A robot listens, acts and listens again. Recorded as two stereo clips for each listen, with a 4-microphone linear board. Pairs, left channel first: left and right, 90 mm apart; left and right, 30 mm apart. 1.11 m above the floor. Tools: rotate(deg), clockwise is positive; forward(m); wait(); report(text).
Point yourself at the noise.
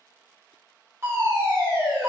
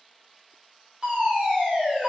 rotate(30)
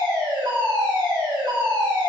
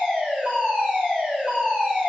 rotate(115)
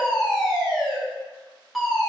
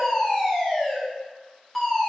report("Facing the fire alarm.")